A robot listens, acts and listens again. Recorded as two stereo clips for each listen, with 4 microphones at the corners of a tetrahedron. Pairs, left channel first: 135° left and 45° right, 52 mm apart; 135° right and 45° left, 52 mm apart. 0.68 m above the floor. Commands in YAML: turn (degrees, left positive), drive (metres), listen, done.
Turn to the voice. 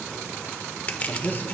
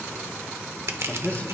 turn: 175
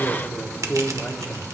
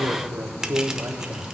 turn: 70
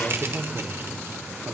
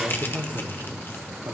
turn: 15
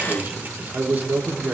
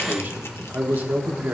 done: "Found it: a man speaking, straight ahead."